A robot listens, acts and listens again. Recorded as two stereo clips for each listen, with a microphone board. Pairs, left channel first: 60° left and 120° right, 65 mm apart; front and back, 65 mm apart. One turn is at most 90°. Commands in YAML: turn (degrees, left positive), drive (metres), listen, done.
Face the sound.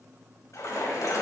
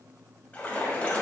turn: 65
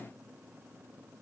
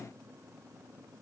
done: "I heard a splash from this way, but can't make it out now."